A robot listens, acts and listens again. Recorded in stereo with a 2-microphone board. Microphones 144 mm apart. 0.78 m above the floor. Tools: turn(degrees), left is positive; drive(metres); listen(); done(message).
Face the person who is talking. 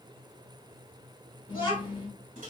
turn(degrees=40)
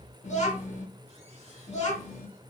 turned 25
turn(degrees=110)
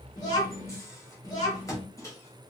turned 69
turn(degrees=40)
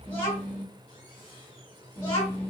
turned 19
turn(degrees=20)
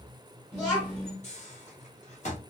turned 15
done("Facing the child speaking, under 1 m away.")